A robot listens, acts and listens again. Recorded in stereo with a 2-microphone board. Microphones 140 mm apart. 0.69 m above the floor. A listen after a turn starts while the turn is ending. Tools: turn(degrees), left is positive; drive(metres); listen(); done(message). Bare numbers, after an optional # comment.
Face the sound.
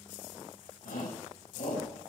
# The shout: about 75° left or 105° left.
turn(75)
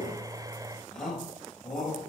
done("Facing the shout, over 4 m away.")